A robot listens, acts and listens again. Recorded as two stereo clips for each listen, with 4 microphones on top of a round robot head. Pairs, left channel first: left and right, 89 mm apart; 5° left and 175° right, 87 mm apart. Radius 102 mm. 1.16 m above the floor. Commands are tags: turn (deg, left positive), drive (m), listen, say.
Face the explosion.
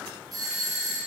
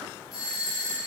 <listen/>
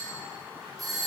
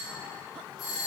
<listen/>
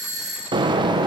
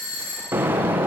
<turn deg="-110"/>
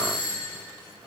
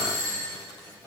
<say>Facing where the explosion came from. I can't hear it now.</say>